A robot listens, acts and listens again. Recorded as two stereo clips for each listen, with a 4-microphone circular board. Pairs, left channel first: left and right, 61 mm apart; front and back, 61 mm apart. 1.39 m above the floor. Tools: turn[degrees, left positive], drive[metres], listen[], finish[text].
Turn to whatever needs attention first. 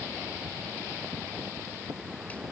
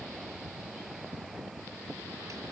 Action: listen[]
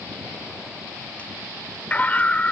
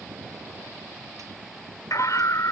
Thought: The scream: 25° left.
Action: turn[25]
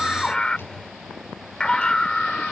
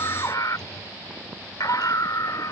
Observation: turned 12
Thought: The scream is now 15° left.
Action: turn[15]
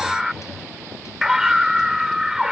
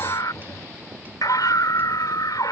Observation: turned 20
Action: finish[Facing the scream.]